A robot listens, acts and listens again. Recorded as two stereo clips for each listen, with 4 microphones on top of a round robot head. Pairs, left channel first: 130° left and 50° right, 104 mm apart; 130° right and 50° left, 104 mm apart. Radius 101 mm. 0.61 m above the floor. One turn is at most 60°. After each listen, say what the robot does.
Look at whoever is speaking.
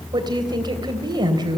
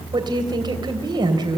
Found it: a woman speaking, straight ahead.